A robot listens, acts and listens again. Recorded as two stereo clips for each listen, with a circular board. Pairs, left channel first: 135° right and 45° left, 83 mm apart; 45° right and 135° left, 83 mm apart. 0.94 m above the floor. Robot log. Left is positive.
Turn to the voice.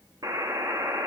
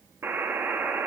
cmd idle
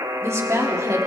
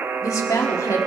end: Facing the woman speaking.